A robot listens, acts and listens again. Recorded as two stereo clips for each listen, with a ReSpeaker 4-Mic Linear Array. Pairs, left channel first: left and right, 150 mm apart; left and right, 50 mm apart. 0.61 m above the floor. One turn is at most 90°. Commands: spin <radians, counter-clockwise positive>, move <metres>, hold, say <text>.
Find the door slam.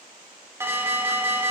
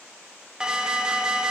hold
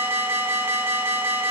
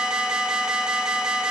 hold
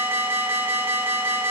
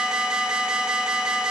say I can't make out a door slam to turn to.